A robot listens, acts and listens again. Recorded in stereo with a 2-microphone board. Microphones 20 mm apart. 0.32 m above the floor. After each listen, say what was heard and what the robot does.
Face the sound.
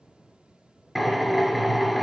Turn 30° left.
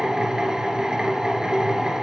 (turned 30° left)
So it is at 30° right. Turn 30° right.
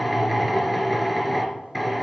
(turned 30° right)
Facing the drill.